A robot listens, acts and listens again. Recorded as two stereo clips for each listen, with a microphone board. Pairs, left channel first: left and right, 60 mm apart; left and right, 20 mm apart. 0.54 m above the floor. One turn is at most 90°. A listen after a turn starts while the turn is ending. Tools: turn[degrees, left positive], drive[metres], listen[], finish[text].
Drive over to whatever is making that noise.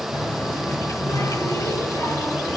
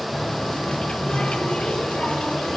Action: turn[90]
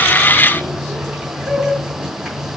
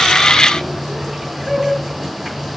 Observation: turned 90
Thought: So it is at 10° right.
Action: turn[-10]
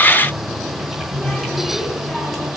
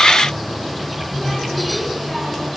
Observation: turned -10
Action: drive[1.0]
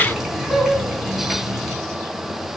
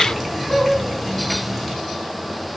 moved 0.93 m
Action: drive[1.0]
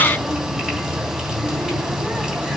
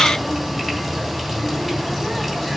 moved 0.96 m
Thought: The running tap is now 15° right.
Action: turn[-15]
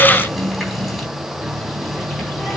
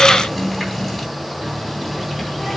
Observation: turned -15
Action: drive[1.0]
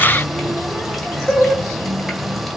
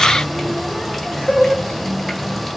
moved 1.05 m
Action: drive[1.0]
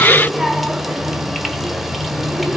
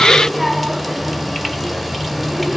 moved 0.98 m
Action: drive[1.0]
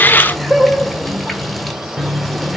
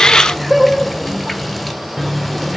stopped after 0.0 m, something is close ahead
Action: finish[I am next to the running tap.]